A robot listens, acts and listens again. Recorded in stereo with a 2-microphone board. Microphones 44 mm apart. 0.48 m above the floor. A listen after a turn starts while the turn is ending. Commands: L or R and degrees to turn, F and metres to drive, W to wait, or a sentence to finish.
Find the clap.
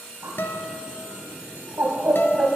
W
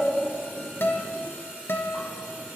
W
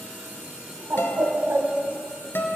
I can't make out a clap to turn to.